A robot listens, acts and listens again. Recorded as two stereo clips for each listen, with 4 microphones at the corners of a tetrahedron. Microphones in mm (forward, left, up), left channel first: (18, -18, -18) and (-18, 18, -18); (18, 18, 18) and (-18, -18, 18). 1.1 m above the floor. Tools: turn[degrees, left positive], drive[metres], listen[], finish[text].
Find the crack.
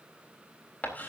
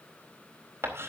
Action: listen[]
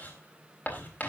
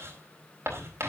Action: listen[]
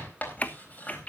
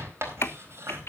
Thought: The crack: 15° left.
Action: turn[15]
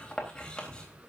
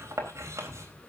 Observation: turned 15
Action: finish[Facing where the crack came from. I can't hear it now.]